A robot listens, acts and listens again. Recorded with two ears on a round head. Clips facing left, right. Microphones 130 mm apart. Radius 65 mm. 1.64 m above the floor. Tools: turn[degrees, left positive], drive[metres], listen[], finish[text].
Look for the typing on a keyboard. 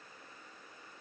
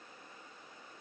Action: listen[]
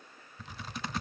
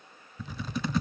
Action: turn[-90]
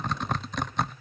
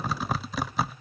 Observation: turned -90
Action: finish[Found it: typing on a keyboard, straight ahead.]